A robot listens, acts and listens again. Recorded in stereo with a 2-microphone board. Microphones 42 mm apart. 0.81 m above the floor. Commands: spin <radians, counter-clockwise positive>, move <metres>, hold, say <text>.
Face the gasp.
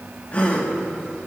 spin 0.61
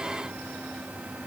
hold
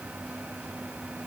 say I heard a gasp, but can't make it out now. It was about straight ahead or 110° left.